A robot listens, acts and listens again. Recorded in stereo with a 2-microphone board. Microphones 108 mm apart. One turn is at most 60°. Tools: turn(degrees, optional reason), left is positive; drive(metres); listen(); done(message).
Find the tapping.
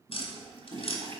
turn(degrees=60, reason="The tapping: about 65° left or 115° left.")
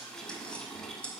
turn(degrees=10, reason="So it is at 10° left.")
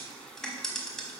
done("Facing the tapping, 1 to 2 m away.")